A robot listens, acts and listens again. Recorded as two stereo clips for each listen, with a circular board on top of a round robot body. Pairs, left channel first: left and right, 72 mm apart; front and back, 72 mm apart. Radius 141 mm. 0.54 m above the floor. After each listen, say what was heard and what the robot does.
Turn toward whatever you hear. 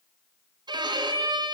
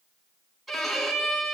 The violin: 90° right. Turn 90° right.
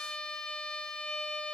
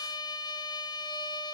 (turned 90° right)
Facing the violin.